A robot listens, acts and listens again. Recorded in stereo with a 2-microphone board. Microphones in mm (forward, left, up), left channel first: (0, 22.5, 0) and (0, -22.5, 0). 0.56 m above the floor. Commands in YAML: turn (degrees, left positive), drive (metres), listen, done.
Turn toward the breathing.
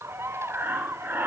turn: -50
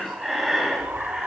done: "Found it: breathing, straight ahead, 2 to 4 m away."